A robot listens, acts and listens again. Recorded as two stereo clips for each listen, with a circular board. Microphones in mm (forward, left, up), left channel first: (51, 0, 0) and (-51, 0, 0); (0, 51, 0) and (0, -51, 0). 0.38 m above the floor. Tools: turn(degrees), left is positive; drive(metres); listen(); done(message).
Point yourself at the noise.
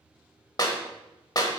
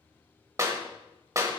turn(degrees=-40)
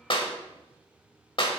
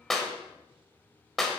done("Found it: a clap, straight ahead, 1 to 2 m away.")